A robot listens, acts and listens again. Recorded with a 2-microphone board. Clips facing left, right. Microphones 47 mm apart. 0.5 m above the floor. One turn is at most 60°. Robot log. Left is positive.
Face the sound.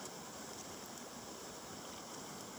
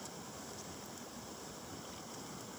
cmd idle
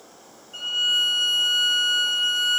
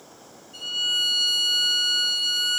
note: The violin: about 40° left or 140° left.
cmd yaw +40
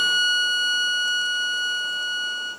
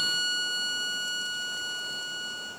note: So it is at 95° left.
cmd yaw +60
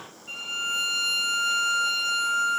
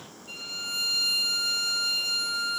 note: The violin is now 45° left.
cmd yaw +45
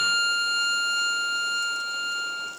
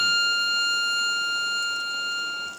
end: Found it: a violin, straight ahead.